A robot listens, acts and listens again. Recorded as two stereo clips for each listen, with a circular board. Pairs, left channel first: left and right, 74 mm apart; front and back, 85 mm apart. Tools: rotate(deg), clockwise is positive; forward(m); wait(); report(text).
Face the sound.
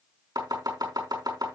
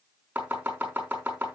rotate(110)
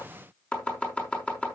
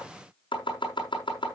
rotate(-20)
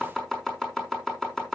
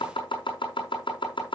report("Facing the chopping.")